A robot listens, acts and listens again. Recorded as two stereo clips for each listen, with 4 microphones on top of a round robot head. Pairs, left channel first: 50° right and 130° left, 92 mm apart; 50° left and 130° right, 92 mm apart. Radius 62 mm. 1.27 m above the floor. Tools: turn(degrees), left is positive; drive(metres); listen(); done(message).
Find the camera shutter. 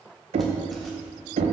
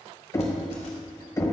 listen()
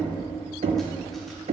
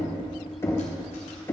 listen()
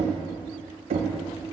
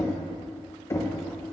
done("I can't make out a camera shutter to turn to.")